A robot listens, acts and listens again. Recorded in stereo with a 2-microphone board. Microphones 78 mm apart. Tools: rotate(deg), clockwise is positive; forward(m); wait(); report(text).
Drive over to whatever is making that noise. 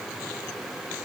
wait()
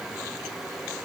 wait()
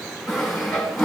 rotate(-30)
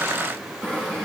rotate(25)
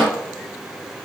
forward(1.0)
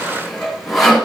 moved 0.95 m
forward(1.0)
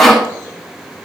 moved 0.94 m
forward(1.0)
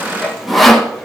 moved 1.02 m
forward(1.0)
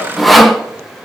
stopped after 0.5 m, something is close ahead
report("Arrived at the sawing, straight ahead.")